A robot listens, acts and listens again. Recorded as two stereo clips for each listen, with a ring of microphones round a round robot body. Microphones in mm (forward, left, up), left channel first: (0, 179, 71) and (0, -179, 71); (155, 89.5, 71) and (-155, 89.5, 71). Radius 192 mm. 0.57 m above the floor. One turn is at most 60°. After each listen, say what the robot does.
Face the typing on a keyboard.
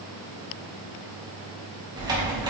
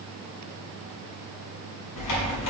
Turn 10° right.
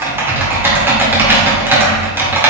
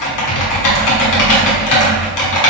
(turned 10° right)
Facing the typing on a keyboard, 1 to 2 m away.